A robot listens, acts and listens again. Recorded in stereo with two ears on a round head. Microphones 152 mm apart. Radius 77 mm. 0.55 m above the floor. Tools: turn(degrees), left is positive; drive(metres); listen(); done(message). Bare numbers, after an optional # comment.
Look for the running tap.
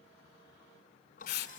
# The running tap: about 50° left or 130° left.
turn(50)
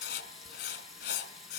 done("Facing the running tap, 2 to 4 m away.")